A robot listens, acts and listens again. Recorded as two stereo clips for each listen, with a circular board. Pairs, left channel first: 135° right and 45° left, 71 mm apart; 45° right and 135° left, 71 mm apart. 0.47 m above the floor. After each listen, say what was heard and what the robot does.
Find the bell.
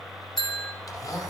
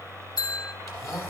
The bell: 50° right. Turn 50° right.
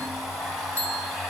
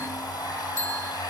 Facing the bell.